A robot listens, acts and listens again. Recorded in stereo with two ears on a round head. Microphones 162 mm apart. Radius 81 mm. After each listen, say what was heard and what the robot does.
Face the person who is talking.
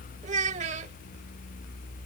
The child speaking: about 40° right or 140° right. Turn 40° right.
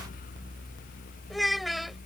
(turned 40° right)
Found it: a child speaking, straight ahead.